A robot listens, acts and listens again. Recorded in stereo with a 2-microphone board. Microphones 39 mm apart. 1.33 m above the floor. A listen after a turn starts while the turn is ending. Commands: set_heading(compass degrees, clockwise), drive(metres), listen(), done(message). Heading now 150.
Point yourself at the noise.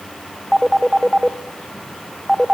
set_heading(165)
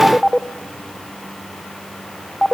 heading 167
done("Found it: a phone ringing, straight ahead, under 1 m away.")